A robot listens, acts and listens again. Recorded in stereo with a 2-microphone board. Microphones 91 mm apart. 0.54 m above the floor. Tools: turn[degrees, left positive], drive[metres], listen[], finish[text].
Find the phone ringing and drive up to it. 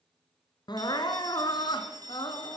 Thought: The phone ringing: about 50° right or 130° right.
Action: turn[-50]
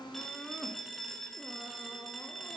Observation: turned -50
Action: drive[1.0]
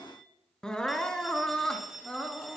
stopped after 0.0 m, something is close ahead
Action: finish[Something is in my way. I am facing the phone ringing but have not reached it.]